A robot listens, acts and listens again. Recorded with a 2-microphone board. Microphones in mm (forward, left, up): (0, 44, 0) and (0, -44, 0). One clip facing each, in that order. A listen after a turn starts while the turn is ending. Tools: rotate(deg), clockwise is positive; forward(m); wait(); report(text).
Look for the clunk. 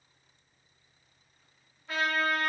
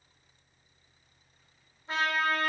wait()
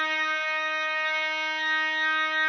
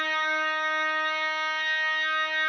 wait()
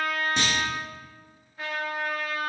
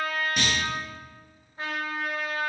rotate(-30)
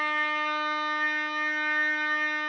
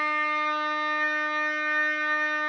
wait()
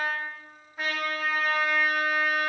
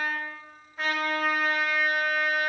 report("I heard a clunk, but can't make it out now. It was about straight ahead or 120° left.")